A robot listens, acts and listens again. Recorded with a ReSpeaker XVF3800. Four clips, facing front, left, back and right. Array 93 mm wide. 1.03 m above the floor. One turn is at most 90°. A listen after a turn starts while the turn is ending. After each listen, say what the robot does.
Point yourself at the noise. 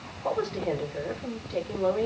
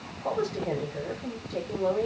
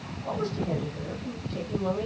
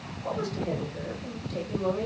Turn 20° left.
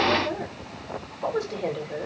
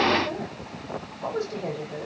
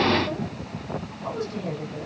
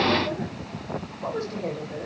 Found it: a woman speaking, straight ahead.